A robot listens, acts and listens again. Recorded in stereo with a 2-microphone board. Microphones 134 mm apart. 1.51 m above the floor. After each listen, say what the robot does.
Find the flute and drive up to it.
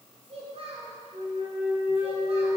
Turn 55° right.
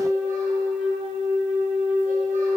Drive 1.0 m forward.
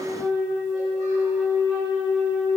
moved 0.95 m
Drive 1.0 m forward.
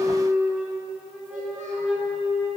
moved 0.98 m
Drive 1.0 m forward.
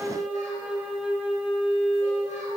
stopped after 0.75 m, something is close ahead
Arrived at the flute, straight ahead.